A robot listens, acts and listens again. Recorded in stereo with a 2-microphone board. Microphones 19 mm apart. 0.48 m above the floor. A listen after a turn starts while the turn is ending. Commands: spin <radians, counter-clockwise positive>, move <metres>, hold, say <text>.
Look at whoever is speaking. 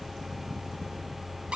hold
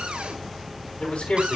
spin 1.31
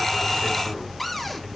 hold
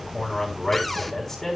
spin 0.35
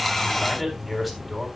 say Facing the man speaking, 2 to 4 m away.